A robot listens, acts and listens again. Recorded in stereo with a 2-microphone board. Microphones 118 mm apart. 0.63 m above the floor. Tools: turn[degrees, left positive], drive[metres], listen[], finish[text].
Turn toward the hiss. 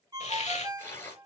Thought: The hiss: about 75° left or 105° left.
Action: turn[75]
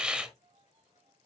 Thought: So it is at 10° right.
Action: turn[-10]
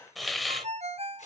Action: finish[Found it: a hiss, straight ahead, 1 to 2 m away.]